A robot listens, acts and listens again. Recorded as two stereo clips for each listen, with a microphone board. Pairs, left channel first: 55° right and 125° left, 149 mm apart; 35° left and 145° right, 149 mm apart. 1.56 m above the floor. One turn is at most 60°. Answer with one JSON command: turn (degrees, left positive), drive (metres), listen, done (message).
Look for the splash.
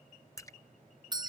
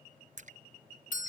{"turn": -60}
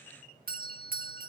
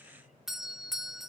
{"turn": -60}
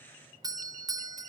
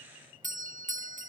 {"done": "Facing where the splash came from. I can't hear it now."}